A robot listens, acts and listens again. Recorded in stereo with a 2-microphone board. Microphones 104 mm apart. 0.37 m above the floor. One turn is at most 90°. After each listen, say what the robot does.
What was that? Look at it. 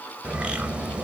Turn 30° right.
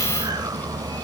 Turn 90° right.
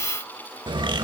Turn 60° right.
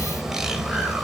Facing the bird.